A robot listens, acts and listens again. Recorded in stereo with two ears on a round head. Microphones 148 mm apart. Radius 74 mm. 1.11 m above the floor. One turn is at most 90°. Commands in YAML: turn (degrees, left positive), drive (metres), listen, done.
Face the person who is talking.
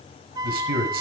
turn: -60
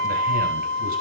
listen: true
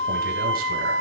listen: true
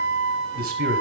turn: -60
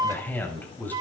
turn: 10
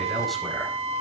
listen: true
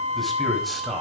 done: "Facing the man speaking."